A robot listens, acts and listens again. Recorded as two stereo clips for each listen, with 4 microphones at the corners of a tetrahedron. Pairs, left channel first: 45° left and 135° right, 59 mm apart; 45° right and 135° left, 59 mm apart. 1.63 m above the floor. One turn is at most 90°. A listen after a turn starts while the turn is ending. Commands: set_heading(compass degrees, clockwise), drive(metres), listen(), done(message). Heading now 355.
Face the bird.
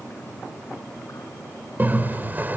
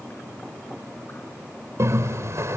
set_heading(265)
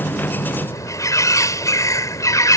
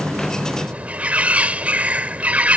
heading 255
set_heading(185)
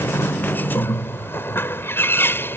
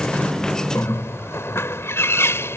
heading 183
done("Found it: a bird, straight ahead.")